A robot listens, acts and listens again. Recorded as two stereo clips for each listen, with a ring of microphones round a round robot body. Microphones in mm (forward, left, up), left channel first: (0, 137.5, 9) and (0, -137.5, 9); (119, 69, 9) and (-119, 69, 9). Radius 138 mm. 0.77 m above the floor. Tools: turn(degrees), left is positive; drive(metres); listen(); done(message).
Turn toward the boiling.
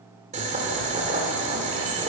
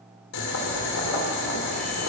turn(degrees=-25)
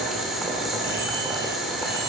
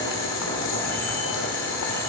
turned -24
done("Found it: boiling, straight ahead.")